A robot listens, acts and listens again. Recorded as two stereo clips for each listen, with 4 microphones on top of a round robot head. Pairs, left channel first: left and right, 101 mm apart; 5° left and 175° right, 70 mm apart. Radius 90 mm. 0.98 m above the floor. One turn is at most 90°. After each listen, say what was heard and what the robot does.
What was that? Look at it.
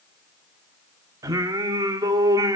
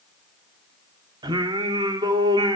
The singing: 150° right. Turn 90° right.
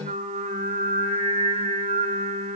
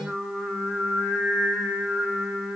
The singing is now 85° right. Turn 85° right.
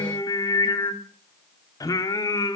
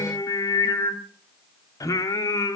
The singing is now 40° left. Turn 40° left.
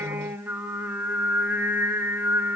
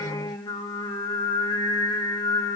The singing is now 20° right. Turn 20° right.
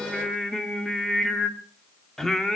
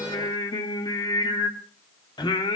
Found it: singing, straight ahead.